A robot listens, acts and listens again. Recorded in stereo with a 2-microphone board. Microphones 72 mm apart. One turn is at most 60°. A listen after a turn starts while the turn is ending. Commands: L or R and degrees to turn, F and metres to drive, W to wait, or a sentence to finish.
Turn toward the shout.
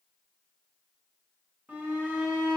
R25
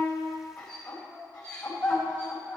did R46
L20
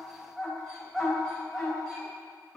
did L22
Found it: a shout, straight ahead.